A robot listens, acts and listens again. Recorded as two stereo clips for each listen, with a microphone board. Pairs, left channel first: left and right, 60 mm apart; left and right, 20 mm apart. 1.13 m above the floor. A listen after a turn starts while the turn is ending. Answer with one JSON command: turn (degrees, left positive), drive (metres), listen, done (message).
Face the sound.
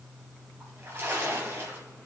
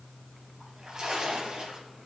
{"turn": -40}
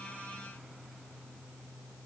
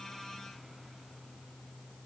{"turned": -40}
{"listen": true}
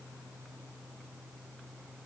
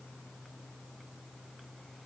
{"done": "I heard a splash, but can't make it out now. It was about straight ahead or 100° right."}